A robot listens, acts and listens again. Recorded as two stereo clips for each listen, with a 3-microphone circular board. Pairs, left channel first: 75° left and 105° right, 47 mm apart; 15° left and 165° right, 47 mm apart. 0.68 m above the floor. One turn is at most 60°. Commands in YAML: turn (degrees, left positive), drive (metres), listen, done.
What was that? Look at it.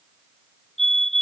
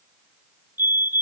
turn: 60
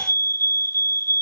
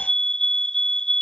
turn: 60
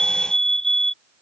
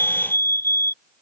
done: "Found it: a fire alarm, straight ahead."